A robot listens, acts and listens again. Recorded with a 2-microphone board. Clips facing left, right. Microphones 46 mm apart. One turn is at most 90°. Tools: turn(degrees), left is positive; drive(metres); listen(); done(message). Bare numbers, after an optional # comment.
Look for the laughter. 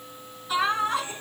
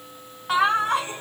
# The laughter: about 70° right or 110° right.
turn(-70)
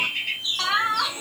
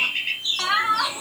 # So it is at 15° right.
turn(-15)
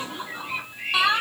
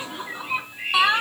# The laughter is now 15° right.
turn(-15)
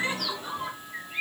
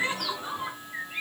done("Found it: laughter, straight ahead.")